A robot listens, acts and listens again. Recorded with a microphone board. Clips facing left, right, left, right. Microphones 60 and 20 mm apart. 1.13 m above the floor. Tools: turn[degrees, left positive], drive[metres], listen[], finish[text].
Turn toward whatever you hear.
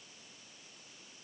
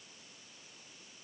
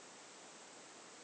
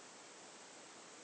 Action: listen[]
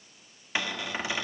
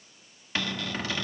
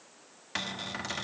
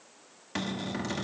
Thought: The cupboard door: about 15° left or 165° left.
Action: turn[15]
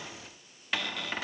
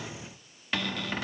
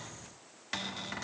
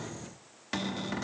Action: finish[Found it: a cupboard door, straight ahead.]